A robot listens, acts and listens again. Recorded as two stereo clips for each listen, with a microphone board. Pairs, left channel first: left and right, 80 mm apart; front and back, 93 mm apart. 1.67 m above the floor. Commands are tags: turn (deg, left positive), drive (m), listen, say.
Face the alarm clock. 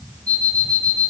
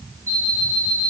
<turn deg="-120"/>
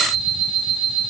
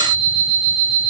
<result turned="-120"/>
<say>Found it: an alarm clock, straight ahead, over 4 m away.</say>